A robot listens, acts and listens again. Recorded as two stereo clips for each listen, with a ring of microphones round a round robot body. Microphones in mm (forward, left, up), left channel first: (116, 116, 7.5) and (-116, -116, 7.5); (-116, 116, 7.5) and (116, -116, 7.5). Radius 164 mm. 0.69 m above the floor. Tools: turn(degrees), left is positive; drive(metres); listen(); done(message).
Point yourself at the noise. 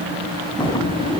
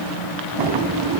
turn(degrees=-30)
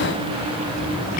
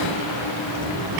turn(degrees=-20)
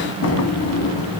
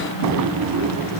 done("Found it: a drawer, straight ahead.")